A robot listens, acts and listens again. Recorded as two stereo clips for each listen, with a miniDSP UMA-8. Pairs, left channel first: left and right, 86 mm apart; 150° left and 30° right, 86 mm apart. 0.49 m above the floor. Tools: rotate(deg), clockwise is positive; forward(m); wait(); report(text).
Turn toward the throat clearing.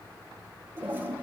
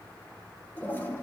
wait()
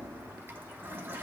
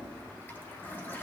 wait()
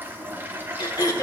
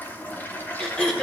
rotate(-70)
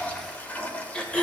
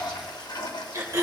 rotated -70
rotate(-15)
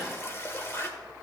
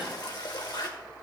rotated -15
wait()
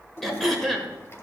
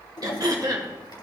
report("Found it: throat clearing, straight ahead, 1 to 2 m away.")